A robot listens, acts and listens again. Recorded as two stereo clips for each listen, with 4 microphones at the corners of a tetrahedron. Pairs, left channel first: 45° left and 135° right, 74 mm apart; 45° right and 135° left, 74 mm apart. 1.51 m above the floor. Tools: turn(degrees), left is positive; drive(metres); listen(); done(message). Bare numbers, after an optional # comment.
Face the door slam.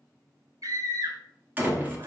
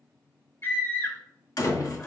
# The door slam: 70° right.
turn(-70)
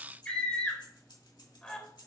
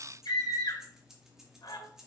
done("Facing where the door slam came from. I can't hear it now.")